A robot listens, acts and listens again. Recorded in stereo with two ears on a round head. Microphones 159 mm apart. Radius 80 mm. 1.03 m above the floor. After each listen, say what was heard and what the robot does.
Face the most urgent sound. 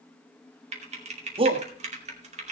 The shout: about 30° right or 150° right. Turn 30° right.
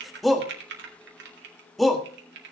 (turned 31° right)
Found it: a shout, straight ahead, 1 to 2 m away.